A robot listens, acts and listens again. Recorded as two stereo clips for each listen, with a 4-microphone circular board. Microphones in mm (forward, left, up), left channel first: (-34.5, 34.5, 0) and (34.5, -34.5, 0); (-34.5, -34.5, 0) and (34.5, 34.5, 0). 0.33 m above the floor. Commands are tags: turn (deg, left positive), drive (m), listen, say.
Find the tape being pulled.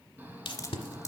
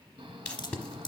<turn deg="150"/>
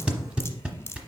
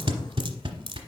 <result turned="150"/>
<turn deg="30"/>
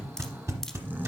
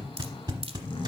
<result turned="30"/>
<turn deg="10"/>
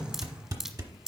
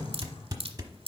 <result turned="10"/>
<say>Facing the tape being pulled, 1 to 2 m away.</say>